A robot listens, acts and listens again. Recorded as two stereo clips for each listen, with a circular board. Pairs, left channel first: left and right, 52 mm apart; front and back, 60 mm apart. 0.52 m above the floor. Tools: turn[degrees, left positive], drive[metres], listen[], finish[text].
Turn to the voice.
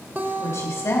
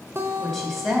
Thought: The woman speaking: 90° left.
Action: turn[90]
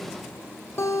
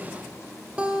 Action: listen[]
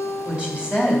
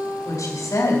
Thought: The woman speaking is now 20° right.
Action: turn[-20]
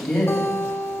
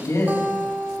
Action: finish[Facing the woman speaking.]